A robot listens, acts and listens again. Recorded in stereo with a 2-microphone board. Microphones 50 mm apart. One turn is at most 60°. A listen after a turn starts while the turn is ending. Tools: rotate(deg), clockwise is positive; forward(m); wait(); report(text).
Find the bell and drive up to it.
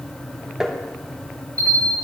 rotate(60)
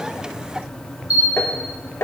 rotate(30)
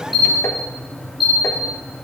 forward(1.0)
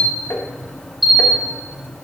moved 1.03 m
forward(1.0)
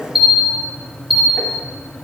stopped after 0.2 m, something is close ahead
report("I am next to the bell.")